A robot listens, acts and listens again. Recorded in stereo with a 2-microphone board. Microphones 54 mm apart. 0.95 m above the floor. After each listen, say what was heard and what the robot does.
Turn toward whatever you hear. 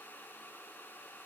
Keep listening.
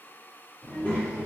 The child speaking: about 35° left or 145° left. Turn 35° left.
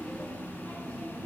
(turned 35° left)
The child speaking: about 25° left or 155° left. Turn 25° left.
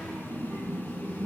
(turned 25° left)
So it is at 20° left. Turn 20° left.
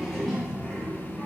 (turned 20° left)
The child speaking is now 10° left. Turn 10° left.
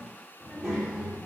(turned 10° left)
Found it: a child speaking, straight ahead, 1 to 2 m away.